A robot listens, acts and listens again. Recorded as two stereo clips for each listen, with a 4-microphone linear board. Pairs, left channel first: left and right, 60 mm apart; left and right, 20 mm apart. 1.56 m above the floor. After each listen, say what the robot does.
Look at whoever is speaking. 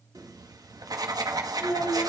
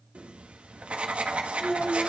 Turn 90° left.
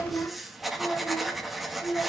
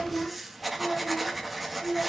Facing the child speaking, over 4 m away.